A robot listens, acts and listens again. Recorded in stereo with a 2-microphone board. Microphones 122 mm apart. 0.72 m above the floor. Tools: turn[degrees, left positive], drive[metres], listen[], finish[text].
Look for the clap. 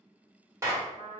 Thought: The clap: about 20° right or 160° right.
Action: turn[-20]
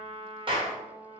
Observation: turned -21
Thought: So it is at 135° right.
Action: turn[-135]
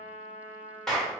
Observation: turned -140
Action: finish[Found it: a clap, straight ahead.]